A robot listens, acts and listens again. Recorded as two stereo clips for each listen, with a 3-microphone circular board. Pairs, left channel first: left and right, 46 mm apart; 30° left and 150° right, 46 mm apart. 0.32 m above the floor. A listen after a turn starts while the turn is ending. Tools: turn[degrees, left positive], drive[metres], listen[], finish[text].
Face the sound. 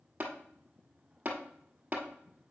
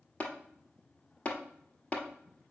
Thought: The tapping: 30° right.
Action: turn[-30]
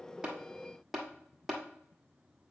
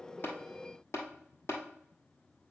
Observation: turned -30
Action: finish[Facing the tapping.]